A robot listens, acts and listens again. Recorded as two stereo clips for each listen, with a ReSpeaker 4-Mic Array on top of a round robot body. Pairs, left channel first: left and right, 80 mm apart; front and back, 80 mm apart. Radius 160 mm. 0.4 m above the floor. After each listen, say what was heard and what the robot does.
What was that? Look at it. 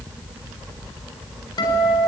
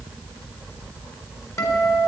The guitar: 55° left. Turn 55° left.
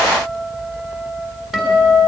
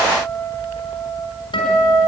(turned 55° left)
Facing the guitar, over 4 m away.